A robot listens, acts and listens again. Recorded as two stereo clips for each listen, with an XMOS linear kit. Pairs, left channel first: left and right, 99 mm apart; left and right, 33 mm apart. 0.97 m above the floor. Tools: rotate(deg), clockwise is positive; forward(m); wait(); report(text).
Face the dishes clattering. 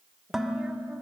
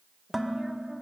rotate(30)
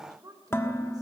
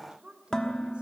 rotate(-25)
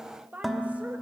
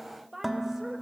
report("Facing the dishes clattering, 1 to 2 m away.")